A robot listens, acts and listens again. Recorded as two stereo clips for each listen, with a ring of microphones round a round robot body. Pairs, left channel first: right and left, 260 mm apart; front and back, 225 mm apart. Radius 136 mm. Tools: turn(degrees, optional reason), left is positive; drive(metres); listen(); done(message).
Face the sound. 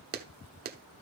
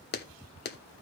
turn(degrees=40, reason="The clap: 40° left.")
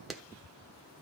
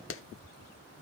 done("Found it: a clap, straight ahead, 1 to 2 m away.")